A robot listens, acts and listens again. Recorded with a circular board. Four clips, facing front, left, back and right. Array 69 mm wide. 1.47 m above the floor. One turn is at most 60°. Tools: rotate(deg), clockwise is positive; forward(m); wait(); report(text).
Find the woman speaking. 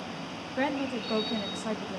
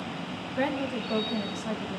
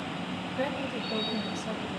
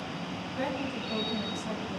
rotate(-15)
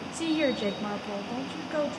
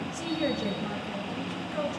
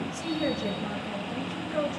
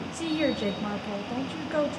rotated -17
rotate(60)
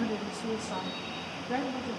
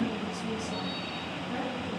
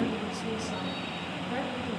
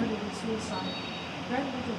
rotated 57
rotate(40)
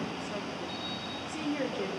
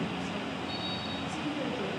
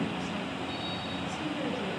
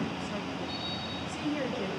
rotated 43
report("Found it: a woman speaking, straight ahead.")